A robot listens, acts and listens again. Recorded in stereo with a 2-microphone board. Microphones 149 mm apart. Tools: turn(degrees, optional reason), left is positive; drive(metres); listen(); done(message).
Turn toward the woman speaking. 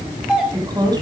turn(degrees=-25, reason="The woman speaking: about 25° right or 155° right.")
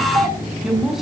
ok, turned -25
done("Found it: a woman speaking, straight ahead.")